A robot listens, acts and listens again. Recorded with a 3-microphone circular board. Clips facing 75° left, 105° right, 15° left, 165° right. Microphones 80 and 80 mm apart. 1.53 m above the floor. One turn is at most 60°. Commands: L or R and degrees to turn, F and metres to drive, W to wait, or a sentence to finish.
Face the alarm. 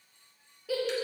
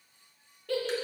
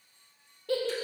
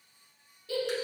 W
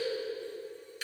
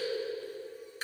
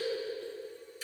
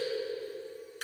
W
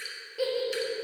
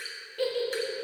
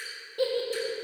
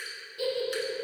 I can't make out an alarm to turn to.